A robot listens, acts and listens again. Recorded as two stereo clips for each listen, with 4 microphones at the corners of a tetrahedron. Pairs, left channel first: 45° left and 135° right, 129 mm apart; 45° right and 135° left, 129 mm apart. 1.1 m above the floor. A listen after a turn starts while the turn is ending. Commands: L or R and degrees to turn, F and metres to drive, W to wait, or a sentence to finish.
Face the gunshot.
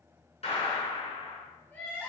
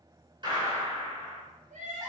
L85
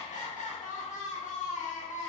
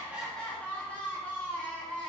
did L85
I heard a gunshot from this way, but can't make it out now.